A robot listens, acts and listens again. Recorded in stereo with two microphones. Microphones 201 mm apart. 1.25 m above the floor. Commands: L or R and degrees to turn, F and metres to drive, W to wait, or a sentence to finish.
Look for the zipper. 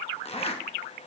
L30
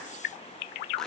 Found it: a zipper, straight ahead.